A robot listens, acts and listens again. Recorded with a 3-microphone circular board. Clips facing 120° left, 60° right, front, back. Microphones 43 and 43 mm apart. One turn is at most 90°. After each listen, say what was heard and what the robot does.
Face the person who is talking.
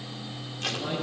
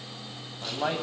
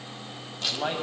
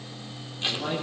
The man speaking: 55° right. Turn 55° right.
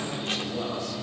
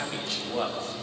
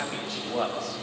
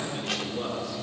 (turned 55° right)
Facing the man speaking, over 4 m away.